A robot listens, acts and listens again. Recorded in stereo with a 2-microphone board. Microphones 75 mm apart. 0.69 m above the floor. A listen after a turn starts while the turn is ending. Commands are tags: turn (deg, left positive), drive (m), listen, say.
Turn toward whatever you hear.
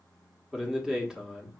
<turn deg="-30"/>
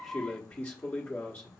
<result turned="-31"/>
<turn deg="25"/>
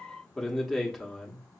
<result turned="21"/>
<say>Found it: a man speaking, straight ahead.</say>